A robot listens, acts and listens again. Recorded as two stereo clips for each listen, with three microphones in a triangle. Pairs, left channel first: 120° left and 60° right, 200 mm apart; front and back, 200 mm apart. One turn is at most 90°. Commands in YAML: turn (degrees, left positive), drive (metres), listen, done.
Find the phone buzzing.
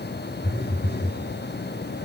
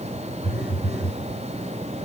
turn: 90
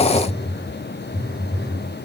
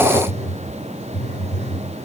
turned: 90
turn: 55
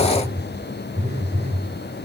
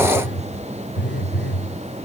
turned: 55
done: "Facing the phone buzzing, 2 to 4 m away."